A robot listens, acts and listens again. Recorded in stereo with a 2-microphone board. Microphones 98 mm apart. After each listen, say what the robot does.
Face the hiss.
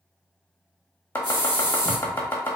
Turn 45° right.
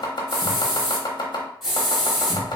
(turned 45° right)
Facing the hiss, 1 to 2 m away.